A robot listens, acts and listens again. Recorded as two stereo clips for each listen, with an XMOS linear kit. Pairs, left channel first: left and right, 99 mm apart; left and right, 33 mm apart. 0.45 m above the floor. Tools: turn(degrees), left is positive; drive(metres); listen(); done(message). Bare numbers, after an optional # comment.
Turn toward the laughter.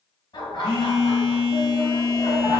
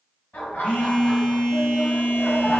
# The laughter: about 55° left or 125° left.
turn(55)
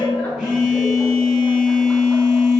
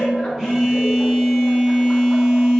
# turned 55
# So it is at 10° left.
turn(10)
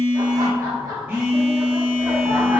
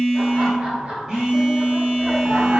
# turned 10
# The laughter is now 35° right.
turn(-35)
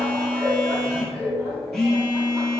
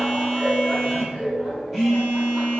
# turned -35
# The laughter is now 15° right.
turn(-15)
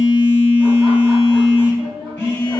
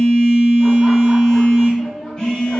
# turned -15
done("Facing the laughter.")